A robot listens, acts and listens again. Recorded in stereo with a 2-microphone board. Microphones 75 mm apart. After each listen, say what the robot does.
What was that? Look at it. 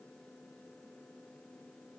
Keep listening.
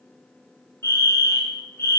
Turn 35° left.
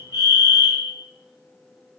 Turn 105° left.
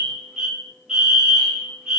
Turn 10° right.
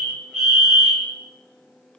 Facing the fire alarm, 2 to 4 m away.